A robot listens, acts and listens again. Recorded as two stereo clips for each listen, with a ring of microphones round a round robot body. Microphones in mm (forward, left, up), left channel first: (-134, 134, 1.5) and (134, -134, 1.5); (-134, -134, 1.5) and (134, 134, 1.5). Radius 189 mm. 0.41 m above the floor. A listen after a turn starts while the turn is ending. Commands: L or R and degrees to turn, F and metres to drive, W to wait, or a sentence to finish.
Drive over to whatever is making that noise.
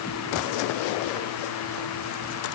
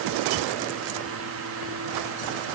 W
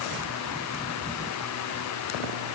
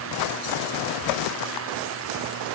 W
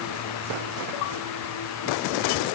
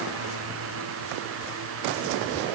I can't make out anything.